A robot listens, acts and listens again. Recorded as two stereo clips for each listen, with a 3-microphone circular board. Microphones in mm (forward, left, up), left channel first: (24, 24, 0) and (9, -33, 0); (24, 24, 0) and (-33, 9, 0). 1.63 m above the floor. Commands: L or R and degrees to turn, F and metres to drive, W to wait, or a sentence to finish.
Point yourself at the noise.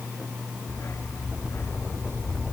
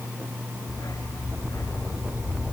L35
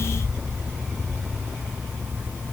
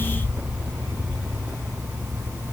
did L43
R10
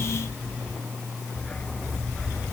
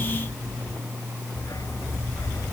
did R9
Facing the dog barking.